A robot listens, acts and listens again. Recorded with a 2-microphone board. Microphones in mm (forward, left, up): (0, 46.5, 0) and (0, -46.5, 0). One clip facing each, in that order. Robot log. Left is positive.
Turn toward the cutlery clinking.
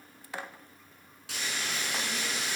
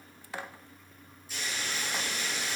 cmd idle
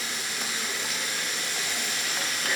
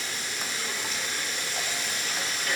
cmd idle
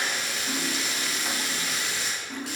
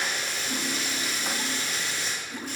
note: The cutlery clinking: about 60° left or 120° left.
cmd yaw +60
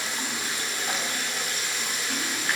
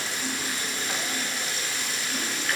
cmd idle
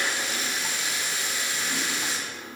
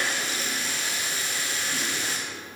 cmd idle
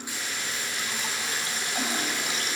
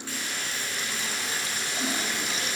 end: I heard cutlery clinking, but can't make it out now. It was about straight ahead or 60° left.